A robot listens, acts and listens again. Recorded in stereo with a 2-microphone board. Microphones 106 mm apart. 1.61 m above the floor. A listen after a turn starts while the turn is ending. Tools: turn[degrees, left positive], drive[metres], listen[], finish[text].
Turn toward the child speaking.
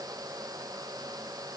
Action: listen[]
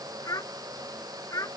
Thought: The child speaking: about 30° left or 150° left.
Action: turn[30]
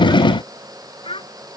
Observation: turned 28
Thought: So it is at 120° left.
Action: turn[120]
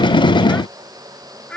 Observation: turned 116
Thought: The child speaking is now 10° left.
Action: turn[10]
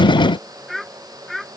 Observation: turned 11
Action: finish[Facing the child speaking.]